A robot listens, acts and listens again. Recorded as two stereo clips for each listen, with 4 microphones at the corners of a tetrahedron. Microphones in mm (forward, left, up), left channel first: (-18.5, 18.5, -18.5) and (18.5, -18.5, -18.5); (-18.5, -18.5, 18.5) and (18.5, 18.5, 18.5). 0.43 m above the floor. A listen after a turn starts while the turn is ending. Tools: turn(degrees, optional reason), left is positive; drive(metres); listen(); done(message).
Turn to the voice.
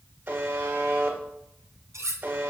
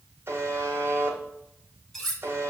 listen()
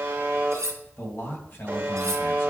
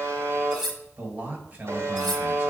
turn(degrees=105, reason="The man speaking: 105° left.")
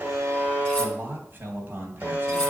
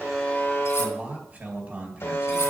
done("Found it: a man speaking, straight ahead.")